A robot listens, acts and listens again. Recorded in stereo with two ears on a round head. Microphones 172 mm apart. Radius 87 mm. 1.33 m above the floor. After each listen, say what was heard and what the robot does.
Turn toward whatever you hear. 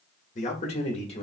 The man speaking: about 35° left or 145° left. Turn 35° left.
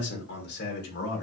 So it is at 120° left. Turn 120° left.
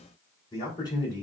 The man speaking is now 25° left. Turn 25° left.
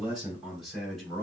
Found it: a man speaking, straight ahead, 2 to 4 m away.